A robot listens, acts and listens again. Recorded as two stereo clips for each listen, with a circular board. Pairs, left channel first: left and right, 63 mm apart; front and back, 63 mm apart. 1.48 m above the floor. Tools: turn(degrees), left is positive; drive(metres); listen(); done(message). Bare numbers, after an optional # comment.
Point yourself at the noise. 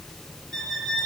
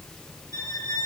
done("Facing the violin.")